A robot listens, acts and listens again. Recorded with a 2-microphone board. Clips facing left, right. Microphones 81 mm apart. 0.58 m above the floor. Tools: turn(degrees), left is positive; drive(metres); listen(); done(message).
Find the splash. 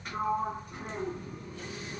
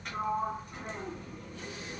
listen()
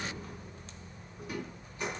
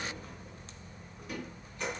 listen()
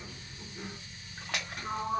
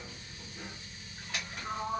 turn(degrees=90)
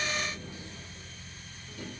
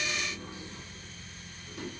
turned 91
done("I heard a splash from this way, but can't make it out now.")